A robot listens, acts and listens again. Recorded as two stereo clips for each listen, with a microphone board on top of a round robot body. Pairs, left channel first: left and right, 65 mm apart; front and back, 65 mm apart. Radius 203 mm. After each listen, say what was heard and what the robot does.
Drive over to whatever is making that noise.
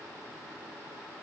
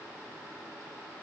Keep listening.
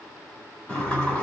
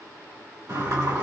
The sliding door: 160° left. Turn 160° left.
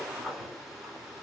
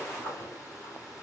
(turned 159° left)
Drive 1.0 m forward.
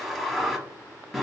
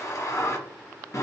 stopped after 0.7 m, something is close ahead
I am next to the sliding door.